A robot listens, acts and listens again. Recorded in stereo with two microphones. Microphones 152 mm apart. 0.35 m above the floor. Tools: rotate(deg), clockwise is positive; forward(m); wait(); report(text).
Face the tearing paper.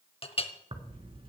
rotate(35)
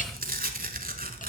rotate(105)
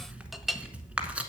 rotate(10)
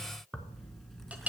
report("Found it: tearing paper, straight ahead.")